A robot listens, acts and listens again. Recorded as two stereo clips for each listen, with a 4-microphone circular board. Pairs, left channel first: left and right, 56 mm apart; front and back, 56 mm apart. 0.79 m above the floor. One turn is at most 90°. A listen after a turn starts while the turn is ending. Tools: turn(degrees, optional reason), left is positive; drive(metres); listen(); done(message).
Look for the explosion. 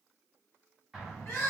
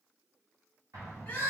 turn(degrees=90, reason="The explosion: straight behind.")
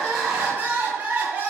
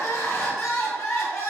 turn(degrees=90, reason="Nothing new. It was at 90° left.")
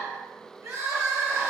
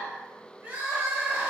done("Facing where the explosion came from. I can't hear it now.")